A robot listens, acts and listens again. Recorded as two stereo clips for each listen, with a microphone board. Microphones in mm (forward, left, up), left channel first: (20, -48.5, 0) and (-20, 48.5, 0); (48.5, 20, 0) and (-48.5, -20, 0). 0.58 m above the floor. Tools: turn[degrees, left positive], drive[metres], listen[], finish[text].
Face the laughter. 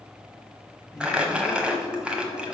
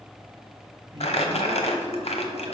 Thought: The laughter: 120° right.
Action: turn[-120]
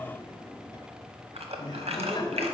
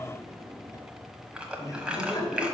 Thought: The laughter is now 30° right.
Action: turn[-30]
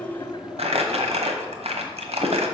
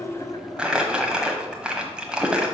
Thought: The laughter is now 30° right.
Action: turn[-30]
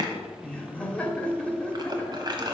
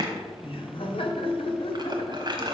Thought: The laughter is now 10° left.
Action: turn[10]
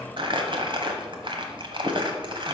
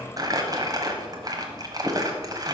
Action: listen[]
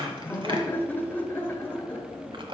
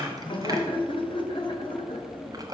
Action: finish[Facing the laughter.]